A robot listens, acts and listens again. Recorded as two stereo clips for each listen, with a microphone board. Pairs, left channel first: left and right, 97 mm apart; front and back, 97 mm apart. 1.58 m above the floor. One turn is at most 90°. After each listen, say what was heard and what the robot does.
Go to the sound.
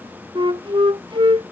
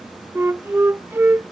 The flute: 115° right. Turn 90° right.
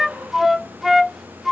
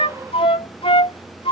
Drive 1.0 m forward.
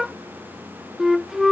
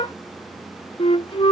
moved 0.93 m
Drive 1.0 m forward.
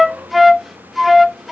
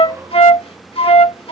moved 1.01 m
Drive 1.0 m forward.
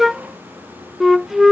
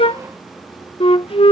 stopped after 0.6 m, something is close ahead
I am next to the flute.